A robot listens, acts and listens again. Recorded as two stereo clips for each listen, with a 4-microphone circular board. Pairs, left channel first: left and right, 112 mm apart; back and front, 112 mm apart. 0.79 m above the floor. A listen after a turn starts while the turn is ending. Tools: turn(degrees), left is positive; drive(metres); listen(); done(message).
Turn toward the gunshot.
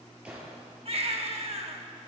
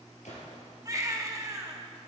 turn(degrees=-170)
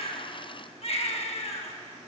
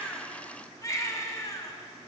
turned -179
turn(degrees=10)
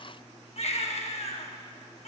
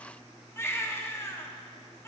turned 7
done("Facing where the gunshot came from. I can't hear it now.")